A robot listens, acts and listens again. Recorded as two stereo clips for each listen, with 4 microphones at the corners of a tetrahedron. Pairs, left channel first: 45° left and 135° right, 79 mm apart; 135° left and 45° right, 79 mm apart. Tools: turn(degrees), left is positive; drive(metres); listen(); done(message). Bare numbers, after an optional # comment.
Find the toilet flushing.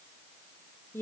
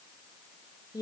listen()
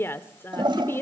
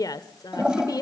# The toilet flushing: 125° right.
turn(-125)
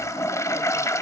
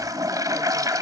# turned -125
done("Facing the toilet flushing, 1 to 2 m away.")